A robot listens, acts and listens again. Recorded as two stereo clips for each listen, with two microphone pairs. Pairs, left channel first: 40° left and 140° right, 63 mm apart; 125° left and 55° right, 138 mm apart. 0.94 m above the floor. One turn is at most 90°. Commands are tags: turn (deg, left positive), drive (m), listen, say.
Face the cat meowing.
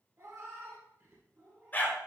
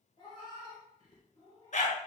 <turn deg="90"/>
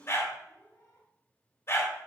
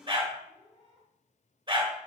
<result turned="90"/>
<turn deg="75"/>
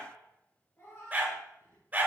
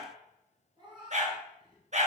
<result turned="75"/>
<say>Found it: a cat meowing, straight ahead, 1 to 2 m away.</say>